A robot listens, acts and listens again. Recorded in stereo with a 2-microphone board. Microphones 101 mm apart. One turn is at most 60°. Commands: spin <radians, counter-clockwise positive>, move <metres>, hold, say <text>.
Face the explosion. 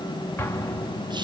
spin 0.44
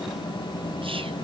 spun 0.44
hold
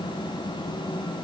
say I heard an explosion, but can't make it out now. It was about straight ahead or 130° left.